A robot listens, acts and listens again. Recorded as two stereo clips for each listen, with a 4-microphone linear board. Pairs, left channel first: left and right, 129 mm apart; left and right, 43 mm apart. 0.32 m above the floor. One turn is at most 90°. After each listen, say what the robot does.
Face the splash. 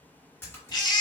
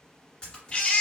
Turn 15° left.
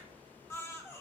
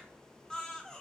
Keep listening.
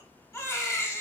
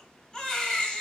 I heard a splash, but can't make it out now. It was about straight ahead or 150° left.